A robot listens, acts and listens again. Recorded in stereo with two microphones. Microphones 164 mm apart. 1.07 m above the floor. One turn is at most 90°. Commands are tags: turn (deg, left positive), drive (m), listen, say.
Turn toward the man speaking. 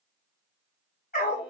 <listen/>
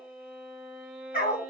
<listen/>
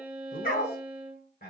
<turn deg="90"/>
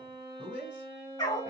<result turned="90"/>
<turn deg="-10"/>
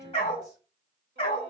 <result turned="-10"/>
<listen/>
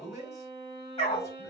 <say>Facing the man speaking.</say>